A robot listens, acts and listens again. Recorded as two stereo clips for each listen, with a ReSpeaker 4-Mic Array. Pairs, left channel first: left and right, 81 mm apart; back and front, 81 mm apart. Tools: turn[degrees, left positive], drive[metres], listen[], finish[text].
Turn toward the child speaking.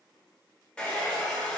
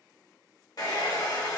Action: listen[]
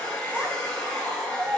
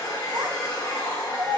Thought: The child speaking: 15° right.
Action: turn[-15]
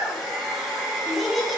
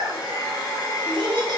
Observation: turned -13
Action: finish[Facing the child speaking.]